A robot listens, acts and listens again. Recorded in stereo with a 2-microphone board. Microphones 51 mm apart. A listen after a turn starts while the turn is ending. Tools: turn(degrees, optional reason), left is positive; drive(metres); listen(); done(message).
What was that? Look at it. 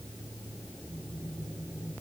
listen()
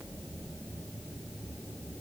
listen()
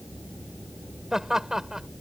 turn(degrees=-30)
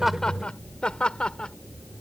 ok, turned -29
turn(degrees=20, reason="So it is at 20° left.")
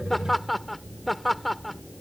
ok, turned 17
done("Facing the laughter.")